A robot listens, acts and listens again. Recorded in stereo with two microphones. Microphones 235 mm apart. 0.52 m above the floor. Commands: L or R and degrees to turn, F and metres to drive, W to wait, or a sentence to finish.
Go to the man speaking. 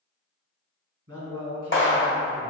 R75
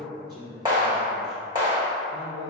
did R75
R20
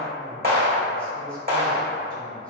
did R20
W
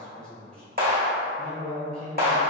F1.0
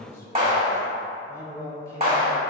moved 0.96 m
L15
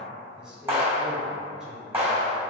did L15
F1.0
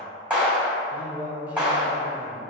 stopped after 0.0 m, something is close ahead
R10
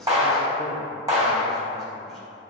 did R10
W
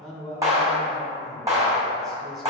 I am next to the man speaking.